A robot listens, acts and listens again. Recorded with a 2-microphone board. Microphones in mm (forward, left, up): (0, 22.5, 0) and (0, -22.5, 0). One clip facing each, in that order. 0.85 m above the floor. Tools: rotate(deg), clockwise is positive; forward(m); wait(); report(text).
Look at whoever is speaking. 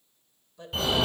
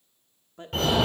rotate(45)
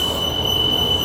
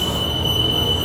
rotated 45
wait()
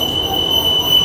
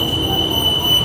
wait()
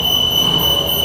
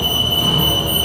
report("I heard a woman speaking, but can't make it out now. It was about straight ahead or 90° right.")